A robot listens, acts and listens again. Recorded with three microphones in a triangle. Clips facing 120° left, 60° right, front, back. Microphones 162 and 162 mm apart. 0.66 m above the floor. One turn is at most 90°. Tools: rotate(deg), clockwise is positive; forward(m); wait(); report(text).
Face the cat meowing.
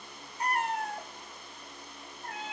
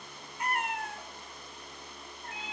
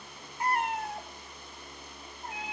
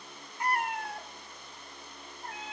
rotate(-75)
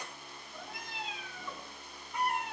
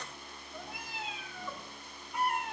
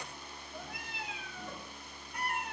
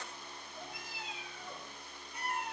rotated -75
rotate(-30)
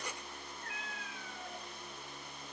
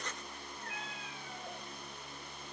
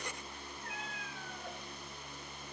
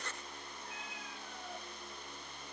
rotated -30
report("Found it: a cat meowing, straight ahead.")